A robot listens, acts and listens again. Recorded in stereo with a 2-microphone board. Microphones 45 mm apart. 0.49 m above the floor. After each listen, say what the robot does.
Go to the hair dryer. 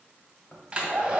Turn 20° right.
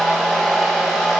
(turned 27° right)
Drive 1.0 m forward.
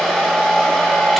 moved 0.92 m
Drive 1.0 m forward.
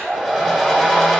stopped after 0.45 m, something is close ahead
Turn 10° left.
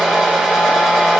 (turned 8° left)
Arrived at the hair dryer, straight ahead.